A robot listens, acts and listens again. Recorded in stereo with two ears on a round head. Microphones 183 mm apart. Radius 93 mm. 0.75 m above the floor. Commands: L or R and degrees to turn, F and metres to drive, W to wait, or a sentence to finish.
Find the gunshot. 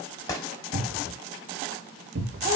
L15
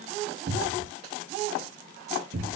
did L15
W
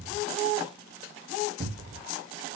I heard a gunshot, but can't make it out now. It was about straight ahead or 150° left.